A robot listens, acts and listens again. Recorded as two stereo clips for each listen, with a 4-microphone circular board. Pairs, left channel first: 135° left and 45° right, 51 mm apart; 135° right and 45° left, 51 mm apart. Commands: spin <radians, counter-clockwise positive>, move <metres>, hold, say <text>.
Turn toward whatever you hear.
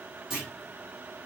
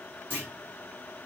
spin 0.52
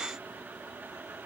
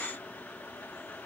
say I heard a clunk from this way, but can't make it out now.